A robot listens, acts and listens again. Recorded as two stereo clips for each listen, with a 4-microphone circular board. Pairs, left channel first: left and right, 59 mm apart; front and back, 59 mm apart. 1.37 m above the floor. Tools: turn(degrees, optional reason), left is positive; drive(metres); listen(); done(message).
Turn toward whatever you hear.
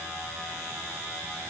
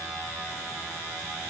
listen()
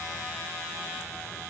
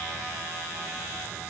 listen()
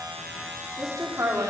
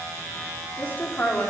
turn(degrees=-60, reason="The woman speaking: 60° right.")
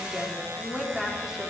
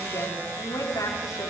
turn(degrees=-10, reason="The woman speaking is now 10° right.")
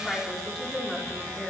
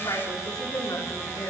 done("Found it: a woman speaking, straight ahead, over 4 m away.")